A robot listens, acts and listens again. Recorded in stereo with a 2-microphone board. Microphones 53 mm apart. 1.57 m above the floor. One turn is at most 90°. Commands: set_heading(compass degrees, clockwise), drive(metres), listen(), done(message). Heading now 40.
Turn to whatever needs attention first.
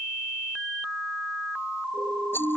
set_heading(85)
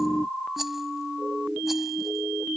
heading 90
set_heading(80)
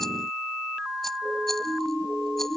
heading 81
done("Found it: a siren, straight ahead.")